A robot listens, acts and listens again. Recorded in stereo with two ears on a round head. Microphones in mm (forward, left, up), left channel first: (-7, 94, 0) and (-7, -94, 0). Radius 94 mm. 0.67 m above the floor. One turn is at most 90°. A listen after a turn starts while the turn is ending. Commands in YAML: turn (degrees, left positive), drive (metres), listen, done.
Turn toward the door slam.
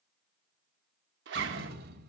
turn: -45
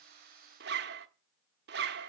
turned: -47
listen: true
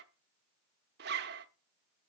done: "I heard a door slam, but can't make it out now. It was about straight ahead or 85° right."